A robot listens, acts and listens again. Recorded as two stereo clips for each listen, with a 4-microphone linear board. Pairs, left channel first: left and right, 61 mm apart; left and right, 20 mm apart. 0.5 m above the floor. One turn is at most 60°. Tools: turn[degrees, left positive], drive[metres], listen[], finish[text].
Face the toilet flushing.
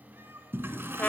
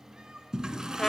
Thought: The toilet flushing: about 35° right or 145° right.
Action: turn[-35]
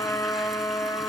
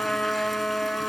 Action: listen[]
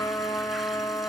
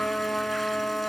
Action: listen[]
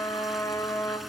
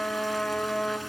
Action: finish[I heard a toilet flushing, but can't make it out now. It was about straight ahead or 110° right.]